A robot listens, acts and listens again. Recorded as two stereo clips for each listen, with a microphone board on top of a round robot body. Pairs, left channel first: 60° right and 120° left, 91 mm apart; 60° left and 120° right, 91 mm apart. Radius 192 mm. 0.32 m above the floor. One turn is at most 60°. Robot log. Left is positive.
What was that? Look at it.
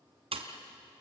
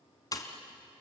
note: The pop: 110° left.
cmd yaw +60
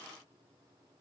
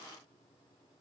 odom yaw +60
note: Nothing new. It was at 50° left.
cmd yaw +50
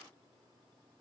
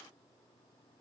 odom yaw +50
end: I heard a pop from this way, but can't make it out now.